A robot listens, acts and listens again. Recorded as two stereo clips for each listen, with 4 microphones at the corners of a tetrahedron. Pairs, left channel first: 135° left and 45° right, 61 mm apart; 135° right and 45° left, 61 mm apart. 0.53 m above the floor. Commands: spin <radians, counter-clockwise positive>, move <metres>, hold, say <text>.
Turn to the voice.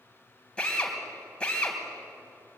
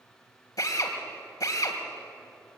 hold
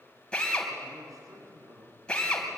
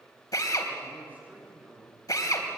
spin -0.35
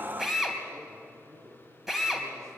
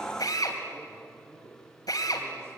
say Facing the man speaking, over 4 m away.